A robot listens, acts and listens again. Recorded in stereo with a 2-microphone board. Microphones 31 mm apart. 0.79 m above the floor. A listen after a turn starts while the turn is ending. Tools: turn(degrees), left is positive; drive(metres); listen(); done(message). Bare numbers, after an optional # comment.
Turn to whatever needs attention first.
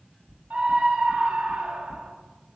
# The scream: about 60° right or 120° right.
turn(-60)
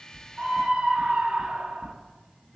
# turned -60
# So it is at 45° right.
turn(-45)
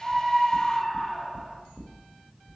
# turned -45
# The scream is now 10° left.
turn(10)
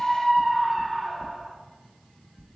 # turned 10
done("Facing the scream, 1 to 2 m away.")